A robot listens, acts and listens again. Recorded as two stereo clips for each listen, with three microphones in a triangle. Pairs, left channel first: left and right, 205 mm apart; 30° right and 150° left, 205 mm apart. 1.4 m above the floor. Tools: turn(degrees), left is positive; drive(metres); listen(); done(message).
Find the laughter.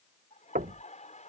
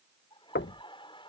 turn(degrees=35)
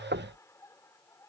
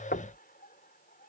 turn(degrees=15)
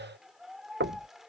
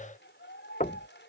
done("Facing the laughter.")